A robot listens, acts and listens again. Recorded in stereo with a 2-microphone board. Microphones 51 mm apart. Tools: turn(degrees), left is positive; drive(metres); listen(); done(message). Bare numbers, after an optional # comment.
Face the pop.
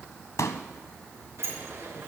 turn(90)
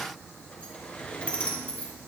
done("I heard a pop from this way, but can't make it out now.")